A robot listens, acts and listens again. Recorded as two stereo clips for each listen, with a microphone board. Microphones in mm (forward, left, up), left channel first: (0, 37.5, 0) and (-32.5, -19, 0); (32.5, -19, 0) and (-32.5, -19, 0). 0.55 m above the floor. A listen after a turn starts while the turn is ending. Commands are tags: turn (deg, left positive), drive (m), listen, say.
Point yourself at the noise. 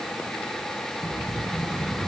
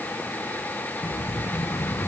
<turn deg="-35"/>
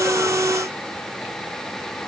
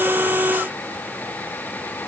<say>I heard an explosion from this way, but can't make it out now.</say>